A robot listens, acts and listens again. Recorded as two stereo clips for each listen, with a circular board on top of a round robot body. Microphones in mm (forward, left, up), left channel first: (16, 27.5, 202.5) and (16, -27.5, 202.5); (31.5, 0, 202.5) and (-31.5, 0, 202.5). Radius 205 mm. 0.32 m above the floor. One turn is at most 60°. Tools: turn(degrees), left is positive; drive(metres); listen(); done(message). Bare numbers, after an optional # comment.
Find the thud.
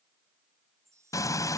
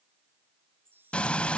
listen()
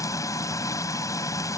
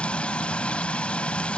listen()
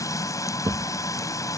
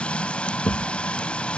# The thud: 55° right.
turn(-55)
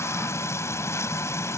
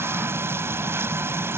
done("I heard a thud from this way, but can't make it out now.")